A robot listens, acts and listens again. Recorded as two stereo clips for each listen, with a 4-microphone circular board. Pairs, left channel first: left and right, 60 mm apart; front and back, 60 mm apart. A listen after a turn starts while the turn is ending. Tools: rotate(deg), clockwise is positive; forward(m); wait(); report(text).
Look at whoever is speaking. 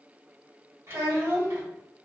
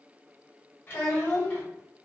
rotate(60)
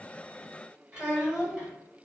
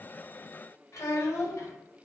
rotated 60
rotate(25)
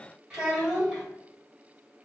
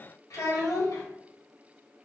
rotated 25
rotate(15)
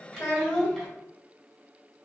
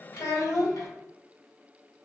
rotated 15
report("Facing the child speaking.")